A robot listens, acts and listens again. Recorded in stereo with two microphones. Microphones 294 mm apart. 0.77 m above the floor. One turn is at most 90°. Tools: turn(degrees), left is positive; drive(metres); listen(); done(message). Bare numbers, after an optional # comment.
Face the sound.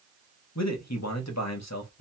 # The man speaking: about 65° left or 115° left.
turn(65)
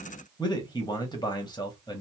# So it is at 15° left.
turn(15)
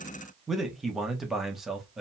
done("Found it: a man speaking, straight ahead, 1 to 2 m away.")